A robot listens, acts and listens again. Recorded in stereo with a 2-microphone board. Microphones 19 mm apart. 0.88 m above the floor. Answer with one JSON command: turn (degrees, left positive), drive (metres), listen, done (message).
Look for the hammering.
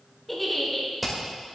{"turn": 30}
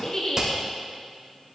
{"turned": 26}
{"turn": -25}
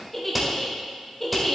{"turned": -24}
{"done": "Facing the hammering."}